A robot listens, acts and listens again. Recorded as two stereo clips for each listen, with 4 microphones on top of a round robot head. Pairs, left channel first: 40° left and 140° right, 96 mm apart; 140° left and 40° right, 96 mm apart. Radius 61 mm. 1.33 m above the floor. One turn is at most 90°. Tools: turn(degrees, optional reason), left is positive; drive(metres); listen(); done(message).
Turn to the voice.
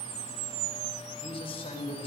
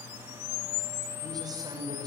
turn(degrees=10, reason="The man speaking: 10° left.")
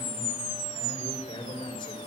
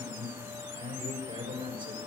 done("Found it: a man speaking, straight ahead.")